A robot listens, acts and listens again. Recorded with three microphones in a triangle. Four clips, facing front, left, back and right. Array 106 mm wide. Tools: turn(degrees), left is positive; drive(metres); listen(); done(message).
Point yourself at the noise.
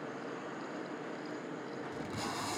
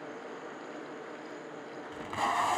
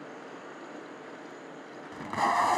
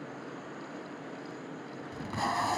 turn(degrees=175)
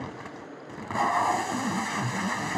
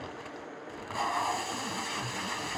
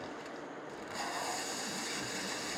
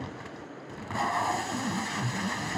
done("Facing the tape being pulled.")